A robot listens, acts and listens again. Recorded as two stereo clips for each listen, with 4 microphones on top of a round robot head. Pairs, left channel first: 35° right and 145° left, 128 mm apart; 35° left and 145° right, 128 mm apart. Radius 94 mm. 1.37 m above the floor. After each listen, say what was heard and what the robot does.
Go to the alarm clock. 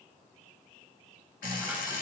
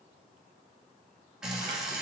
The alarm clock: 55° right. Turn 55° right.
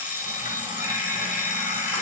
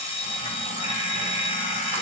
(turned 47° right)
The alarm clock is now 10° right. Turn 10° right.
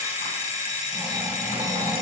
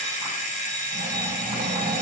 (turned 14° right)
Drive 1.0 m forward.
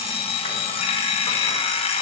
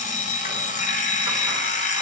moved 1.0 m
The alarm clock is now 10° left. Turn 10° left.
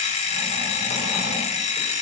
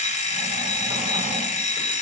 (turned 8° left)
Drive 1.0 m forward.
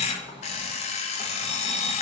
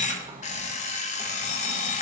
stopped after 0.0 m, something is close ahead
I am next to the alarm clock.